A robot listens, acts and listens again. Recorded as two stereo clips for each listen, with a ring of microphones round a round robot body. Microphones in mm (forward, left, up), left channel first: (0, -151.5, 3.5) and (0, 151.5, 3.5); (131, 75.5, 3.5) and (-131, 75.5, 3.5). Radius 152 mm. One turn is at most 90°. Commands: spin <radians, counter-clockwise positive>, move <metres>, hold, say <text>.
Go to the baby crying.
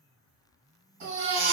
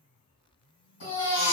spin 0.52
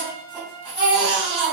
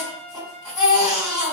move 1.0
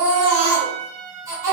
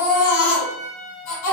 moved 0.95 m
spin 0.17
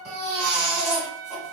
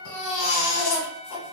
move 1.0
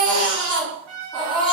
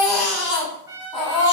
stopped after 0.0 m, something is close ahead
say Arrived at the baby crying, straight ahead.